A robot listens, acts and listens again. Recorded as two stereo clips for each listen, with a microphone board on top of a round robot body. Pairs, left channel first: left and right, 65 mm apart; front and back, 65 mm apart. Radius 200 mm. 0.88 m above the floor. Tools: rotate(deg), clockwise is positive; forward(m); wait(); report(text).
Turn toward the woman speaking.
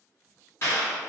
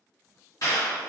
wait()
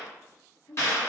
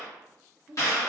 rotate(-105)
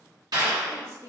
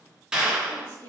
rotate(50)
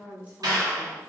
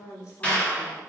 rotate(25)
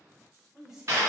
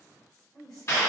rotate(10)
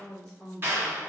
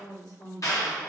report("Facing the woman speaking.")